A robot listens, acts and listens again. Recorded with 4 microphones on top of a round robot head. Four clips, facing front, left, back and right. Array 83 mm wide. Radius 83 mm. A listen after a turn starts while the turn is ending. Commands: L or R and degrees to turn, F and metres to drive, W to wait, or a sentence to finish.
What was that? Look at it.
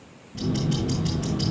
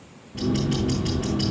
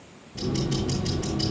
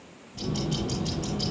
L60
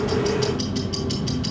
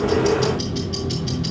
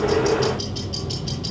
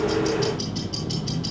Facing the ticking, over 4 m away.